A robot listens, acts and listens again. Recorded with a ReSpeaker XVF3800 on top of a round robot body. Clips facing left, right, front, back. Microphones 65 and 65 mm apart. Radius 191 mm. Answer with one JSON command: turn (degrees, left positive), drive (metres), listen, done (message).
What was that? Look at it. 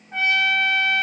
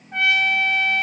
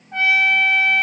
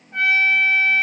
{"done": "Found it: a trumpet, straight ahead, under 1 m away."}